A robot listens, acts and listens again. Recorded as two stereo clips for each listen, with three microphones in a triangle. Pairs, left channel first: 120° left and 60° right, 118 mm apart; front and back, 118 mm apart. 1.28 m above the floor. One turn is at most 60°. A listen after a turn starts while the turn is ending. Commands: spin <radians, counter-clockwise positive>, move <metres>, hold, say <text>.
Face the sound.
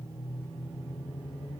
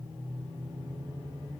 hold
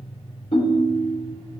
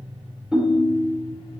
spin 1.05
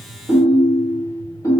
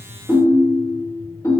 spin 1.05
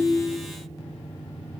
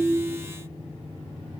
hold
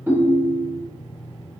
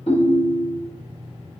spin 0.17
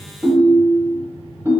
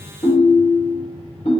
say Found it: a ringtone, straight ahead.